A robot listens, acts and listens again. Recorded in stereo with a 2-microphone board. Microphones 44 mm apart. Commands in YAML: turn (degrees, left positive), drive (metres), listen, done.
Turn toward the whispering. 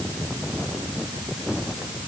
listen: true
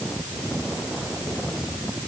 listen: true
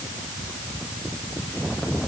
done: "I can't make out whispering."